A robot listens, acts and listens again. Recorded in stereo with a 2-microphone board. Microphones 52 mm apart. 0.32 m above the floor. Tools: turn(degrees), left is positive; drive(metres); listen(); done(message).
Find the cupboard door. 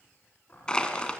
turn(degrees=30)
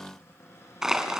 turn(degrees=120)
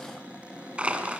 turn(degrees=-25)
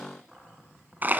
turn(degrees=-10)
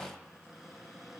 done("Facing the cupboard door, over 4 m away.")